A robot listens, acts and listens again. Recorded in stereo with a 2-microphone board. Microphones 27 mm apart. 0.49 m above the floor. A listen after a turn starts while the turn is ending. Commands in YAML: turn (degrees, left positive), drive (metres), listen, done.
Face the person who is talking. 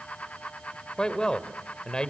turn: 35
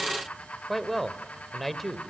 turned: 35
done: "Facing the man speaking, 1 to 2 m away."